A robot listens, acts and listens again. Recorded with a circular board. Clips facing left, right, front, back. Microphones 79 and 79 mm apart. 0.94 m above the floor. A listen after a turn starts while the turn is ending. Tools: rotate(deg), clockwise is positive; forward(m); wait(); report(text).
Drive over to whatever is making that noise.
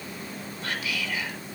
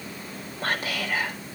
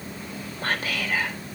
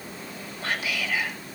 rotate(45)
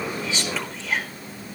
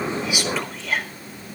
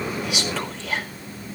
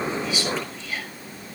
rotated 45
forward(1.0)
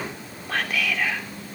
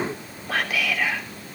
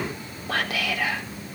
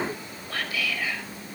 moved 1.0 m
forward(1.0)
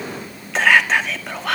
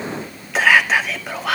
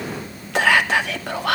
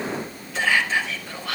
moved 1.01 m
forward(1.0)
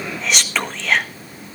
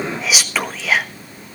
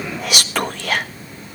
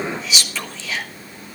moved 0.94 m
forward(1.0)
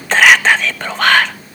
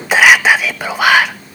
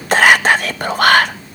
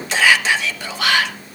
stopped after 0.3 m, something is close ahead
rotate(10)
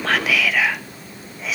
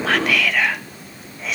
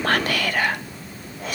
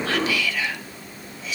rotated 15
report("Arrived at the whispering, straight ahead.")